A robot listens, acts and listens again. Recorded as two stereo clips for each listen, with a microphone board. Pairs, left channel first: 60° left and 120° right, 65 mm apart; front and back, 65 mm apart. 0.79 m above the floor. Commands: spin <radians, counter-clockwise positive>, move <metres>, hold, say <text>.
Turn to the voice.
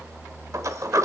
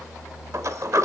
hold
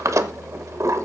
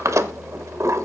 hold
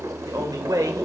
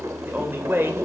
spin -2.27
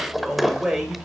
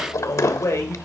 spin -0.61
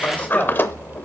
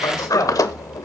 say Found it: a man speaking, straight ahead.